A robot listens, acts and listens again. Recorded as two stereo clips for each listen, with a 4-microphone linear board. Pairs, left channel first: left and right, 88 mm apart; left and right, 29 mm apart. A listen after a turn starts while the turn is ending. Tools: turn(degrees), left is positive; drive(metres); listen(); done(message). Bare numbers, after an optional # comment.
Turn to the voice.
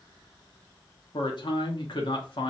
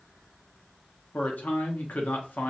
turn(90)
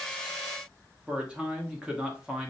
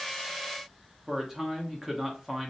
# So it is at 15° right.
turn(-15)
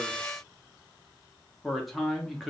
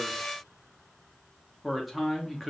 done("Found it: a man speaking, straight ahead, 1 to 2 m away.")